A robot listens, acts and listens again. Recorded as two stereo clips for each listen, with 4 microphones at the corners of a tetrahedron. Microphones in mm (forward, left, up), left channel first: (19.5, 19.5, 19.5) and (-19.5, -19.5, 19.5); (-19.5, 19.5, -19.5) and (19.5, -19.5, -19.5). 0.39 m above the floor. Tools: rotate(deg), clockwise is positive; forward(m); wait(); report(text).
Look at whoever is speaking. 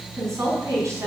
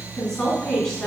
rotate(150)
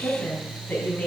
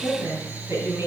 rotate(15)
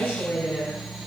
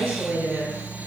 report("Facing the woman speaking, 2 to 4 m away.")